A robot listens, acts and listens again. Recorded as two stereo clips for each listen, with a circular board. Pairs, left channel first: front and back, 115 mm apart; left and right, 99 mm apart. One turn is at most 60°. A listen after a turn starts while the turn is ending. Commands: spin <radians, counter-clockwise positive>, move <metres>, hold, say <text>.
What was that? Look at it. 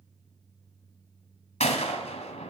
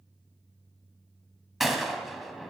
say Facing the gunshot, 1 to 2 m away.